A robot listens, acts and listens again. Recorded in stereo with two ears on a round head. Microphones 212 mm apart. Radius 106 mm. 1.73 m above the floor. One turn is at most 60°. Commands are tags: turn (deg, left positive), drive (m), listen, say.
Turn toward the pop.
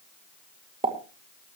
<turn deg="-25"/>
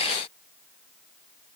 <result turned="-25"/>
<listen/>
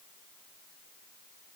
<say>I heard a pop, but can't make it out now. It was about straight ahead or 130° right.</say>